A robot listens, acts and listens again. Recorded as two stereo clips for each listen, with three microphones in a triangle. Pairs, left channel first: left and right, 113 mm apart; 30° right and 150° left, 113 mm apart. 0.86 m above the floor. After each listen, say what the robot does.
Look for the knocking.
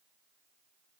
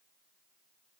Keep listening.
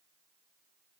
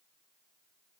Keep listening.
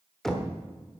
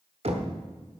Turn 175° left.
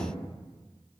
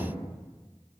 Keep listening.
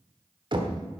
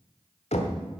Turn 45° right.
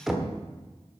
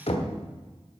Found it: knocking, straight ahead.